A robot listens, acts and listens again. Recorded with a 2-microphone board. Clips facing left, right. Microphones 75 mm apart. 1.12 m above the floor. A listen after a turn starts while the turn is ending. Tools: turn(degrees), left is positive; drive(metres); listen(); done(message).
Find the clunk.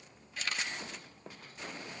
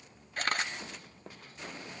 listen()
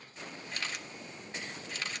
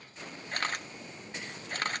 listen()
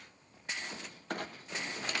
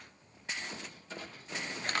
turn(degrees=65)
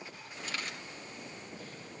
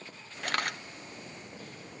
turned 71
listen()
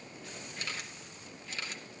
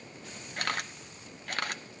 done("I heard a clunk, but can't make it out now. It was about 5° right or 45° left.")